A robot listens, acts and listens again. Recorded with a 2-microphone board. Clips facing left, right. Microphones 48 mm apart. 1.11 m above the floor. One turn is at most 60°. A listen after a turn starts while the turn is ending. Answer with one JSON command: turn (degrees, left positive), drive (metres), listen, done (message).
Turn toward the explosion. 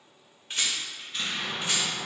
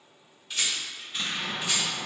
{"turn": -30}
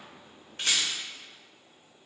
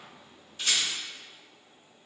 {"listen": true}
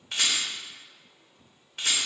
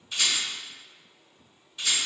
{"done": "I heard an explosion, but can't make it out now. It was about 25° left or 145° right."}